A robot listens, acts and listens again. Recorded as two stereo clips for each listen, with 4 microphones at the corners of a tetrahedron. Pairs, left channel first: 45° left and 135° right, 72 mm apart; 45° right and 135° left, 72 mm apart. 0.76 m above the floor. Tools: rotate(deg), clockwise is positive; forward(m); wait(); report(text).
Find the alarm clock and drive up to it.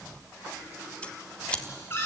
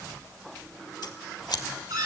wait()
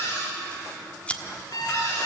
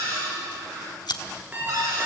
rotate(-70)
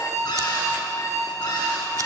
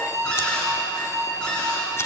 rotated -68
forward(1.0)
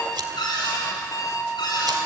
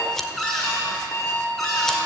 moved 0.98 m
forward(1.0)
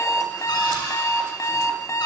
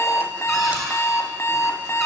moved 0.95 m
forward(1.0)
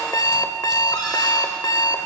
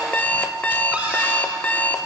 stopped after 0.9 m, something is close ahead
rotate(-20)
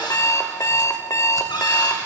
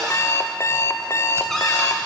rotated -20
report("Arrived at the alarm clock, straight ahead.")